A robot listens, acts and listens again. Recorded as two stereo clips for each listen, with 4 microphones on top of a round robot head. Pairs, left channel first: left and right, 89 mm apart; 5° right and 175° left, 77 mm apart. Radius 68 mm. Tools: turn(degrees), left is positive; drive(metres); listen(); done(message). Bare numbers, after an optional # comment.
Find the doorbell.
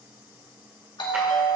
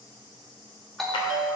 # The doorbell: 85° left.
turn(85)
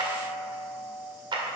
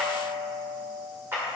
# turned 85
# The doorbell is now 20° right.
turn(-20)
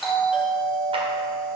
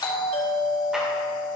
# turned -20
done("Facing the doorbell.")